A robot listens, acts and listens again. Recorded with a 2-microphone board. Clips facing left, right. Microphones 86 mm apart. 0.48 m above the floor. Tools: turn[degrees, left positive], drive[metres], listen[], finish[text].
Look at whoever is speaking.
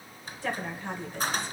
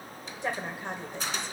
Thought: The woman speaking: about 20° right or 160° right.
Action: turn[-20]
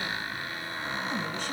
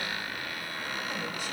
Action: listen[]
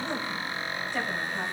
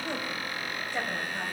Thought: The woman speaking: about 15° right or 165° right.
Action: turn[-15]
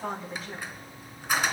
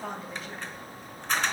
Action: turn[30]
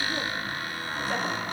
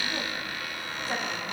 Action: listen[]
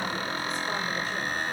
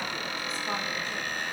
Action: listen[]
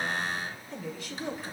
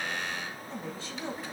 Thought: So it is at 30° right.
Action: turn[-30]
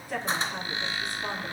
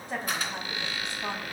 Thought: The woman speaking is now 25° right.
Action: turn[-25]
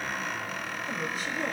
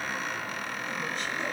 Action: finish[Facing the woman speaking.]